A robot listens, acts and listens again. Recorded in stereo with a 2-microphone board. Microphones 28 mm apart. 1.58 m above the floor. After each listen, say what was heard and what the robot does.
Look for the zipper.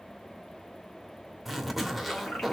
Turn 30° left.
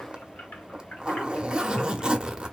So it is at 30° right. Turn 30° right.
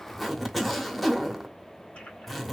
Facing the zipper, under 1 m away.